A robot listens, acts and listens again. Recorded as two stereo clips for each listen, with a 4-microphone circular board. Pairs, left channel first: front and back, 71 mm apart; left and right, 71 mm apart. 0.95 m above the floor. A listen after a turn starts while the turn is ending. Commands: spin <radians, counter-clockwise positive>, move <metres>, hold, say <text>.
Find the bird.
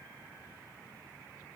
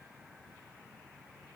hold
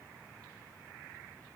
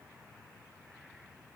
hold
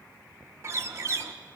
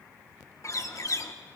spin 2.27
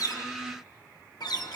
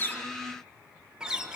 spin -0.26
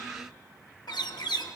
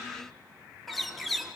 say Found it: a bird, straight ahead.